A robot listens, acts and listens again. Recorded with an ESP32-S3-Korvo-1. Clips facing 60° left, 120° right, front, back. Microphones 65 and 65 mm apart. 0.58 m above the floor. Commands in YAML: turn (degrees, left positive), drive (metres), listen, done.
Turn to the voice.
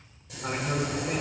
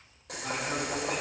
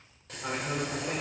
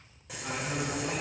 turn: 30
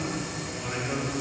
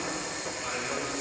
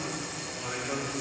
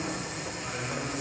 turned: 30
turn: -15
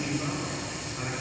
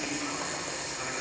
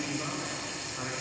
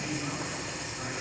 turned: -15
done: "Facing the man speaking."